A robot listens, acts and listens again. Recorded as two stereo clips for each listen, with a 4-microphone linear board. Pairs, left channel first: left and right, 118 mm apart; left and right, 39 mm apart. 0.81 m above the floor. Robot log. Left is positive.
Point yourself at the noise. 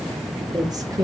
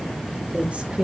note: The woman speaking: about 30° right or 150° right.
cmd yaw -30
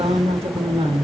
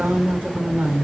note: So it is at 130° right.
cmd yaw -130
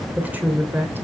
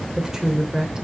note: The woman speaking is now 20° right.
cmd yaw -20
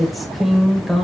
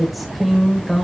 end: Facing the woman speaking, 2 to 4 m away.